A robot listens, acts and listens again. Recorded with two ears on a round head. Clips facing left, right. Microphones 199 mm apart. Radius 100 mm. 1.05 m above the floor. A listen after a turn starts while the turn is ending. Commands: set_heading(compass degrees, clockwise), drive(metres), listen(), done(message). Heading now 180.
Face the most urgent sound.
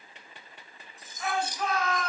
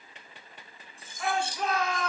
set_heading(235)
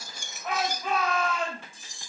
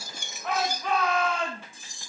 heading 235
done("Found it: a shout, straight ahead, over 4 m away.")